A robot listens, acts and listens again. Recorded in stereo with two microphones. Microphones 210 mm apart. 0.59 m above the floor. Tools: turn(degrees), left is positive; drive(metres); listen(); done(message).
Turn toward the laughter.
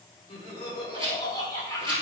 turn(degrees=30)
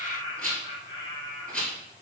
turn(degrees=20)
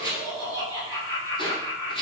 turn(degrees=30)
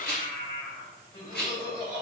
turn(degrees=145)
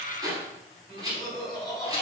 done("Facing the laughter.")